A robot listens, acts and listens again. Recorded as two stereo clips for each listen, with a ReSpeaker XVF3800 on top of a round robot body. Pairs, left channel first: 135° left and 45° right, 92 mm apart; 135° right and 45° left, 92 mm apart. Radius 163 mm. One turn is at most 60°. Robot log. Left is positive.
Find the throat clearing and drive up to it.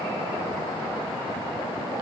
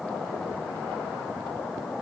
cmd idle
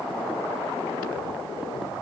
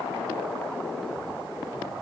cmd idle
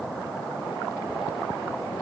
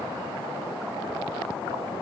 end: I can't make out throat clearing.